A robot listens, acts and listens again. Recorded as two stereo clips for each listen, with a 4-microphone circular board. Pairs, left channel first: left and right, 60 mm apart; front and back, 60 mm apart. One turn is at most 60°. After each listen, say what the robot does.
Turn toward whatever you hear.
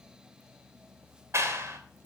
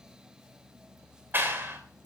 Turn 60° right.
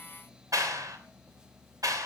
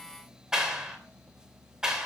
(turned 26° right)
Turn 60° right.
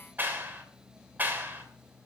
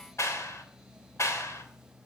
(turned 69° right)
Turn 35° right.
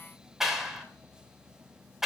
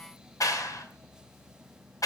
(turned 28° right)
Facing the clap.